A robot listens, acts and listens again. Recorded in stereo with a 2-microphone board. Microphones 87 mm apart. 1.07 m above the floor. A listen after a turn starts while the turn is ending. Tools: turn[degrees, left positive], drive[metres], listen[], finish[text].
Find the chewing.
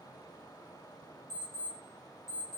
Action: listen[]
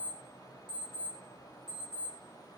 Action: listen[]
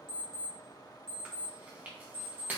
Thought: The chewing: about 20° right or 160° right.
Action: turn[-20]
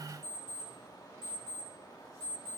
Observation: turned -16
Action: listen[]
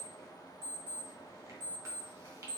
Action: listen[]
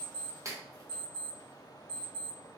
Thought: So it is at 145° right.
Action: turn[-145]
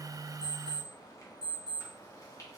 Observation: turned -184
Thought: Nothing new. It was at 40° left.
Action: turn[40]
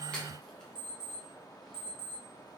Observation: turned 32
Thought: Nothing new. It was at 10° left.
Action: turn[10]
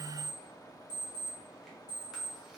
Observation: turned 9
Action: finish[Facing where the chewing came from. I can't hear it now.]